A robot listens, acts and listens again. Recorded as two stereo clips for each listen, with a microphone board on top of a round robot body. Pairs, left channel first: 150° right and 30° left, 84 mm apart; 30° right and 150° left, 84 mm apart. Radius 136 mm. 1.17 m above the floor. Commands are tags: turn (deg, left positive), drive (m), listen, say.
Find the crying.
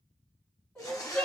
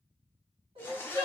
<turn deg="130"/>
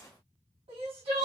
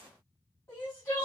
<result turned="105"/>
<turn deg="25"/>
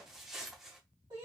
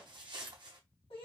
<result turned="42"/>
<turn deg="-15"/>
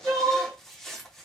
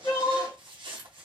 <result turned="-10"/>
<say>Facing the crying, 2 to 4 m away.</say>